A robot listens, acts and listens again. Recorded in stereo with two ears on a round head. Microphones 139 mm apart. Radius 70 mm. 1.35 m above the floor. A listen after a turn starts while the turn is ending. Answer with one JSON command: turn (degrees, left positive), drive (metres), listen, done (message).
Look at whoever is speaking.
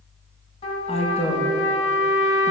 {"turn": 40}
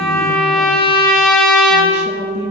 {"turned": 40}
{"turn": 95}
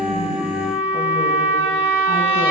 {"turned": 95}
{"listen": true}
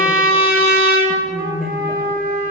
{"done": "Facing the woman speaking, 1 to 2 m away."}